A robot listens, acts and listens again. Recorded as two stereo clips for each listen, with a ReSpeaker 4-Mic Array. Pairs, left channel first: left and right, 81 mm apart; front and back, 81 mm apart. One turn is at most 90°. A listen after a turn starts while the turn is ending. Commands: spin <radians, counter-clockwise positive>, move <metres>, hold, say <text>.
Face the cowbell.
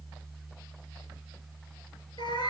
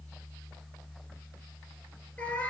hold
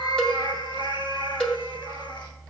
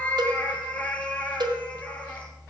spin 1.57
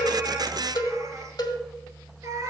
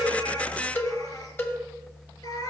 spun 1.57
spin 1.05
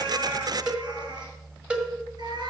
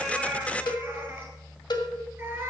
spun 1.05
spin -0.26
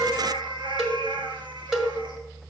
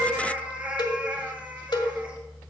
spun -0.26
say Facing the cowbell.